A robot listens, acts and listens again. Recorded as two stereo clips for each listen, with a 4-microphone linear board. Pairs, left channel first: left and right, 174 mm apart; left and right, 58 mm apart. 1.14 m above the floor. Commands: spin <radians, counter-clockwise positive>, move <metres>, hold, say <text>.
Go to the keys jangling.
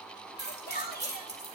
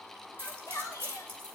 spin -0.70
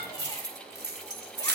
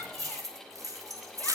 spin -1.75
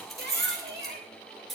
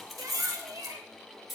move 1.0
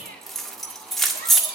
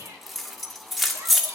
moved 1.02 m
move 1.0
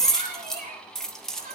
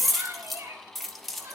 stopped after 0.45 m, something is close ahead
say I am next to the keys jangling.